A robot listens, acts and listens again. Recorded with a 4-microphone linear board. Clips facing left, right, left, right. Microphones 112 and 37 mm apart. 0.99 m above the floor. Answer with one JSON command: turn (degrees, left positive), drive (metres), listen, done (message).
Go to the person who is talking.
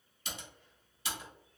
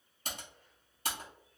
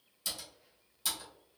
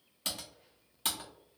{"listen": true}
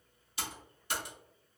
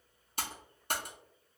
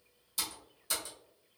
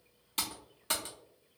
{"listen": true}
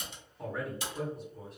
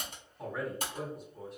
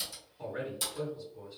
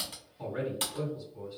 {"turn": 30}
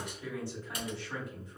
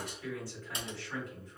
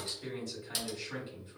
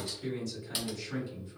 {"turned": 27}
{"turn": 155}
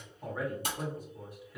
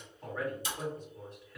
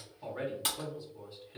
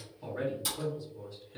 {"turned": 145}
{"turn": 10}
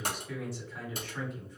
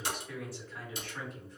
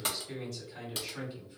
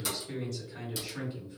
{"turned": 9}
{"drive": 1.0}
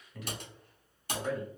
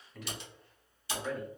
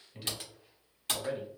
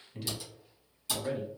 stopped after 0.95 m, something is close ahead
{"done": "Arrived at the man speaking, straight ahead."}